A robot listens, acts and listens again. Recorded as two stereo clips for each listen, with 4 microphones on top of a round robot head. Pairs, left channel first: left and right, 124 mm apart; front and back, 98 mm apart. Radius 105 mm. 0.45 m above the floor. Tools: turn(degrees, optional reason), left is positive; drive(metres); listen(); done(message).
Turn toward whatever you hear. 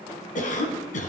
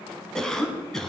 turn(degrees=85, reason="The cough: 85° left.")
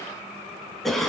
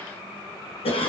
done("Found it: a cough, straight ahead.")